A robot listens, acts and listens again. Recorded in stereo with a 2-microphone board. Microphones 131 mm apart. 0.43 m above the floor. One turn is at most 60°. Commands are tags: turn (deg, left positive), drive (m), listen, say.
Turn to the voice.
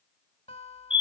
<listen/>
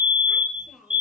<turn deg="-30"/>
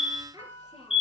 <turn deg="-60"/>
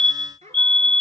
<turn deg="-60"/>
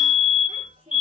<turn deg="-40"/>
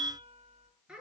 <say>Facing the child speaking, over 4 m away.</say>